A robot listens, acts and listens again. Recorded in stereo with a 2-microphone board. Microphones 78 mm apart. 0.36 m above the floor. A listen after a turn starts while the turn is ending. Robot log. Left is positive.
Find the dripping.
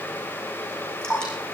cmd yaw +30
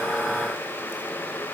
cmd idle
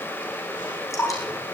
note: So it is at 140° left.
cmd yaw +140
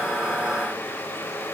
cmd idle
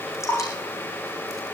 note: The dripping is now 35° left.
cmd yaw +35
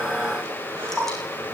end: Found it: dripping, straight ahead, over 4 m away.